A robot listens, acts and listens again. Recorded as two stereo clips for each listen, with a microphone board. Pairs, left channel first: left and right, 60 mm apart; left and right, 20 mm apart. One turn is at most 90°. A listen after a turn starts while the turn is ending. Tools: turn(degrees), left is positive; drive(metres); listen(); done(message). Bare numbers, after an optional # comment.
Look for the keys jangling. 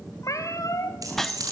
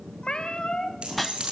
turn(-90)
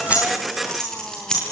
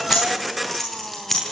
# So it is at 10° left.
turn(10)
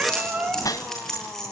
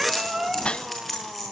done("Found it: keys jangling, straight ahead.")